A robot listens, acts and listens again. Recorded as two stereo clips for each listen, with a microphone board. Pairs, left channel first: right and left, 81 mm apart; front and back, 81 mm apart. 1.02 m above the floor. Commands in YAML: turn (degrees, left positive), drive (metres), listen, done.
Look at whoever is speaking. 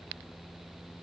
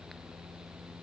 listen: true
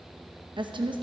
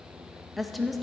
turn: 90
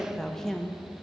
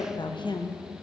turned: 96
done: "Found it: a woman speaking, straight ahead, under 1 m away."